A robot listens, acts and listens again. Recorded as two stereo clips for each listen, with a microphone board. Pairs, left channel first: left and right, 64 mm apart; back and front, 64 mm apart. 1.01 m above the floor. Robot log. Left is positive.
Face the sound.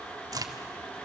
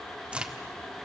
note: The crack: 70° right.
cmd yaw -70
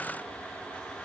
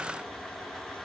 end: I heard a crack from this way, but can't make it out now.